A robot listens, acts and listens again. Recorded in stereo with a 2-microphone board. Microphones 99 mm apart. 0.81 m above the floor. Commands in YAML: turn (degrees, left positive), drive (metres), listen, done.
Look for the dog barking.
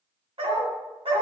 turn: -90
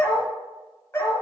turn: 30
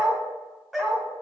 done: "Facing the dog barking, 1 to 2 m away."